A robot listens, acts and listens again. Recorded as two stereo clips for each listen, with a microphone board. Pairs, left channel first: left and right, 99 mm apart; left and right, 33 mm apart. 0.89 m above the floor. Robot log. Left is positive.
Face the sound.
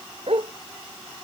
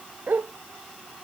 cmd yaw -90
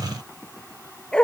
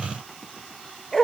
note: So it is at 10° left.
cmd yaw +10
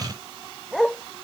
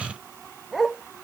end: Found it: a dog barking, straight ahead.